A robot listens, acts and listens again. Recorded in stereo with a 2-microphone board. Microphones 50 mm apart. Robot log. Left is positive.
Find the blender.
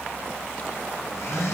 cmd yaw +90
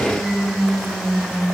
end: Found it: a blender, straight ahead.